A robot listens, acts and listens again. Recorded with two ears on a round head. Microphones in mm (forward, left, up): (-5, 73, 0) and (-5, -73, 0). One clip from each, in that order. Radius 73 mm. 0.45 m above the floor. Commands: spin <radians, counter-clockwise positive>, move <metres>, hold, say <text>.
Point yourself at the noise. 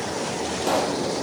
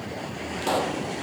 spin -0.52
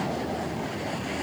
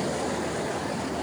hold
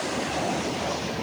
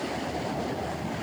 say I heard a pop, but can't make it out now. It was about 20° left or 140° right.